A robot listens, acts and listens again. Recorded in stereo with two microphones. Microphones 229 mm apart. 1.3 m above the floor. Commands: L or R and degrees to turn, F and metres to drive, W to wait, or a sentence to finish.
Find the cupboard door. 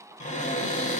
L30
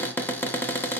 L10
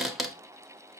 Facing the cupboard door.